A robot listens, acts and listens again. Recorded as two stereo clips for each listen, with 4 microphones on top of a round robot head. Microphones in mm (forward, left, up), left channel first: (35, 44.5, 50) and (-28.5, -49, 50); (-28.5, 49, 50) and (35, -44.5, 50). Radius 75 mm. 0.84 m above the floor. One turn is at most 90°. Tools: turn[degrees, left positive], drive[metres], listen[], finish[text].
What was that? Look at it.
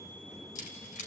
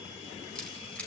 Thought: The keys jangling: 40° left.
Action: turn[40]
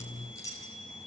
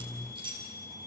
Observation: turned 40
Action: finish[Found it: keys jangling, straight ahead.]